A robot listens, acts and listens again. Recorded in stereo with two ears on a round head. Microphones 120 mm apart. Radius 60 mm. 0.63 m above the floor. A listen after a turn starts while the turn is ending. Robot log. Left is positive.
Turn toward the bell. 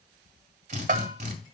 note: The bell: about 65° right or 115° right.
cmd yaw -65
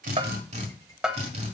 end: Facing the bell.